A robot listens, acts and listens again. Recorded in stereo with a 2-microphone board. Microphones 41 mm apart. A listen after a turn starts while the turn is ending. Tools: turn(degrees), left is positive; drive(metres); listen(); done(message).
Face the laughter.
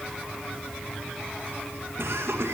turn(degrees=-90)
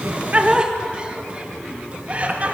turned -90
turn(degrees=-35)
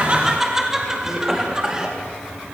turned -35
turn(degrees=-15)
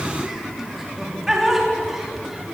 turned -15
turn(degrees=-10)
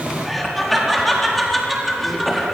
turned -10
done("Facing the laughter, over 4 m away.")